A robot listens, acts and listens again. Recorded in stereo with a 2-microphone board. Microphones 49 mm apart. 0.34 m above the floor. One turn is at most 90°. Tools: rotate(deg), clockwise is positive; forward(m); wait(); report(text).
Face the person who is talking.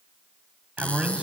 rotate(30)
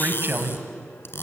rotate(90)
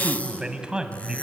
rotate(20)
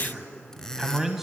report("Facing the man speaking.")